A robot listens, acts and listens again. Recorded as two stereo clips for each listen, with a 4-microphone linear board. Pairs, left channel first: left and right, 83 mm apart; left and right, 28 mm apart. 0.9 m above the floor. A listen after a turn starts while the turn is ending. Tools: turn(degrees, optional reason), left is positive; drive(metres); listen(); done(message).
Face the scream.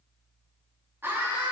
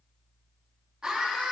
turn(degrees=-25, reason="The scream: about 25° right or 155° right.")
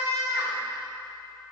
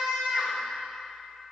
turn(degrees=-125, reason="So it is at 125° right.")
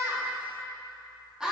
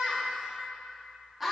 turn(degrees=-10, reason="The scream is now 10° right.")
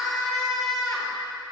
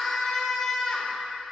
done("Facing the scream.")